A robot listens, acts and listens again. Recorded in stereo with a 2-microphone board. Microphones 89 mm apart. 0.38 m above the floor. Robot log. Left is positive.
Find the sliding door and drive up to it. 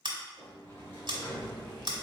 note: The sliding door: about 25° left or 155° left.
cmd yaw +25
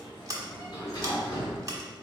note: So it is at 125° left.
cmd yaw +125
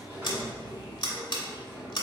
note: The sliding door is now 30° right.
cmd yaw -30
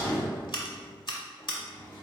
note: The sliding door is now 20° left.
cmd yaw +20
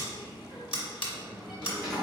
cmd fwd 1.0
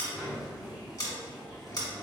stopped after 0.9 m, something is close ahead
end: Arrived at the sliding door, straight ahead.